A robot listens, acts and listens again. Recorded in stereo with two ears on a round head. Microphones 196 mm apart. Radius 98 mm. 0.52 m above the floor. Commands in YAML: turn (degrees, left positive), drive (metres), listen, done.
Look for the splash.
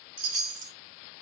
listen: true
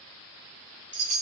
listen: true
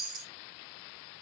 done: "I can't make out a splash, only a chime."